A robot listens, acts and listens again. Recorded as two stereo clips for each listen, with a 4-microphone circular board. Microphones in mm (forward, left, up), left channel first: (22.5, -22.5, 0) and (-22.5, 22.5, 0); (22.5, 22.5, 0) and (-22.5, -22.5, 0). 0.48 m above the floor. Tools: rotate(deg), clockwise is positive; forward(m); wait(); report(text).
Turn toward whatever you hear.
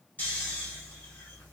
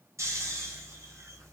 rotate(105)
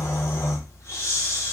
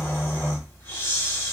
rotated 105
rotate(10)
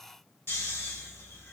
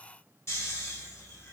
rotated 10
report("Facing the snoring, 1 to 2 m away.")